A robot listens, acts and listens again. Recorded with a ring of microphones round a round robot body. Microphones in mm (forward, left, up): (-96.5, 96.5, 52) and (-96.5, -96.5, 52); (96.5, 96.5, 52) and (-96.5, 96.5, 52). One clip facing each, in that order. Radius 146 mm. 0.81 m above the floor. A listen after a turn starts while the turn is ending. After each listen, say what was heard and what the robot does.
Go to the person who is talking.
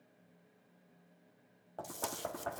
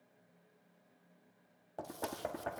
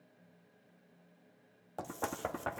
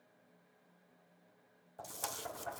Keep listening.
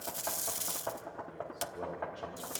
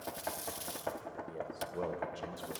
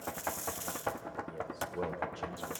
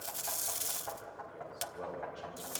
The man speaking: 45° right. Turn 45° right.
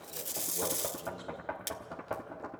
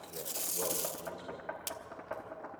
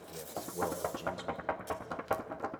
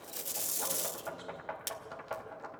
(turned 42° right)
Keep listening.
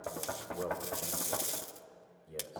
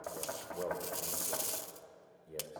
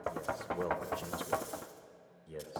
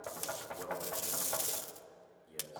Drive 1.0 m forward.
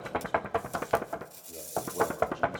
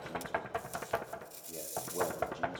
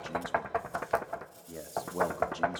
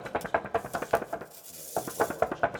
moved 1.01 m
Keep listening.
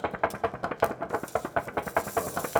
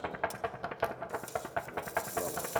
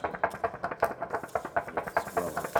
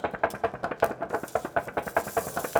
Keep listening.
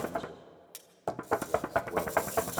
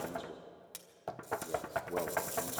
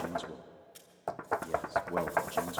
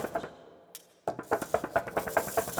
Drive 1.0 m forward.
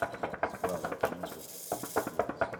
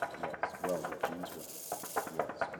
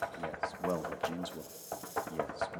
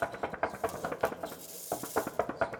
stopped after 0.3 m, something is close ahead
The man speaking is now 15° right. Turn 15° right.
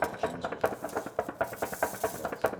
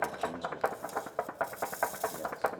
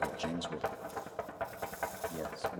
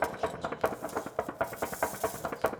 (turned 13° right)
Keep listening.
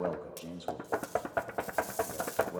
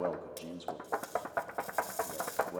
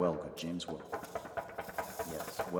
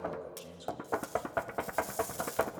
Arrived at the man speaking, straight ahead.